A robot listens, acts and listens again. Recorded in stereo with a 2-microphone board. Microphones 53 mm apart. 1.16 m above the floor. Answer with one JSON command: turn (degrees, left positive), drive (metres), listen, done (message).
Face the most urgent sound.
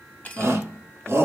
{"turn": -50}
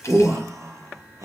{"turn": -80}
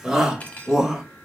{"turn": -10}
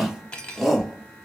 {"done": "Found it: a shout, straight ahead."}